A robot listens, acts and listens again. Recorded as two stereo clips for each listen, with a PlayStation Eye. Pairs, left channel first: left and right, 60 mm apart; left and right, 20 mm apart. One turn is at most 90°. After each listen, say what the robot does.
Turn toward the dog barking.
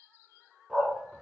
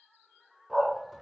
Turn 30° right.
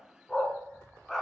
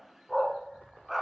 Turn 30° left.
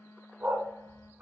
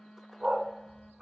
Turn 40° right.
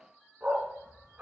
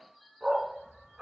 Turn 30° right.
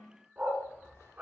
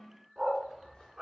Turn 25° right.
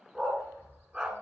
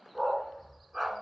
Turn 10° right.
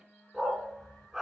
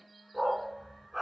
Facing the dog barking.